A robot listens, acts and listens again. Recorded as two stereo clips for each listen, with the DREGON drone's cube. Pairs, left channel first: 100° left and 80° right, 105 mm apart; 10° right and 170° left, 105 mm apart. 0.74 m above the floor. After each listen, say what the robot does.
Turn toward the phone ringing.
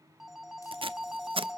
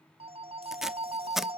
Turn 165° right.
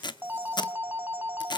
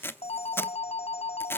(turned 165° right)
Facing the phone ringing, 1 to 2 m away.